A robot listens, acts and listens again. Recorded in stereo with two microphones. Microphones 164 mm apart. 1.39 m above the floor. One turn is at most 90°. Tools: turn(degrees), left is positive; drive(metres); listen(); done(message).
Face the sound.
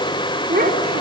turn(degrees=-75)
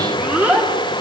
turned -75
turn(degrees=-10)
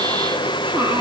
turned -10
listen()
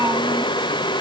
turn(degrees=-20)
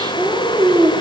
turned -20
turn(degrees=-25)
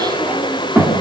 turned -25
turn(degrees=-15)
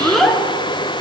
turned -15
done("Found it: a child speaking, straight ahead.")